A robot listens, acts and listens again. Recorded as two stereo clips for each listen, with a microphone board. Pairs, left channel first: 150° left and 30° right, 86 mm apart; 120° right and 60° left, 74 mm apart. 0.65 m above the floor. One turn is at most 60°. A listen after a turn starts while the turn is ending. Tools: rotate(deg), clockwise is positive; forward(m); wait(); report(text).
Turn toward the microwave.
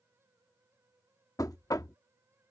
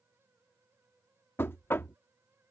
wait()
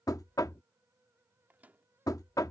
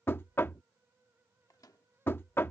rotate(60)
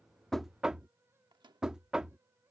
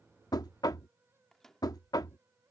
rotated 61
rotate(35)
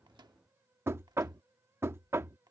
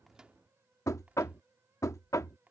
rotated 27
rotate(10)
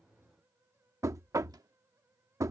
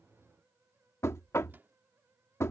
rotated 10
report("Facing the microwave.")